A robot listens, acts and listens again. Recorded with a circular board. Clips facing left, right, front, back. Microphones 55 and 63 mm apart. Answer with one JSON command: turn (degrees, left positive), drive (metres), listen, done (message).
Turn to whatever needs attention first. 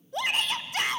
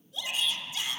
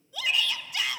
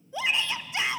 {"turn": 120}
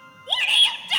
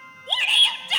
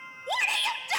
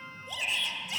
{"done": "Facing the shout."}